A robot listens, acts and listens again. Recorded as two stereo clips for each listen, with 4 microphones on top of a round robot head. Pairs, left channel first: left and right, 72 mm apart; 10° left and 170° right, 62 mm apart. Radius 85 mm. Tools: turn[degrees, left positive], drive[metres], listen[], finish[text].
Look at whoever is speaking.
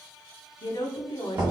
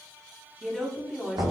Thought: The woman speaking: 105° left.
Action: turn[105]
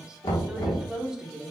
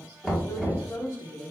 Thought: The woman speaking is now 10° right.
Action: turn[-10]
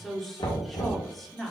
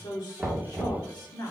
Action: finish[Found it: a woman speaking, straight ahead, 1 to 2 m away.]